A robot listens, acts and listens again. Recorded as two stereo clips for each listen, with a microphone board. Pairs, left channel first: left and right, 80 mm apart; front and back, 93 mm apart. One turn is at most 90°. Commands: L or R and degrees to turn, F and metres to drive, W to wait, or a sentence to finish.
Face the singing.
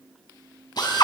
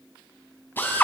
W
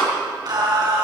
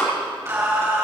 R90
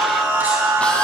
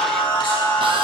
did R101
R25
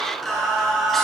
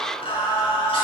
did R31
Facing the singing.